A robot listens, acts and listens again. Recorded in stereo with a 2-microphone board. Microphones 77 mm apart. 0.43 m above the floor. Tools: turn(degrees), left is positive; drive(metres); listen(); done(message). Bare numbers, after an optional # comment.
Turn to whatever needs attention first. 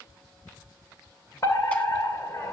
# The fire alarm: about 45° left or 135° left.
turn(45)
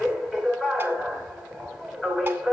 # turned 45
done("Facing the fire alarm.")